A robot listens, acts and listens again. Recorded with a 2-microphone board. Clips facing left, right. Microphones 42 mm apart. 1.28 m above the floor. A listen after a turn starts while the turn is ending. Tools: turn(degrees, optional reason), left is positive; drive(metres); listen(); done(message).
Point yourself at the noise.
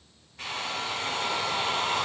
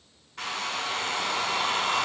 turn(degrees=-90)
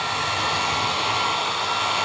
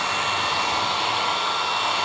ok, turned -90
turn(degrees=-15, reason="So it is at 15° right.")
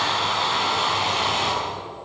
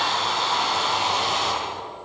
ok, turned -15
done("Found it: a hair dryer, straight ahead, over 4 m away.")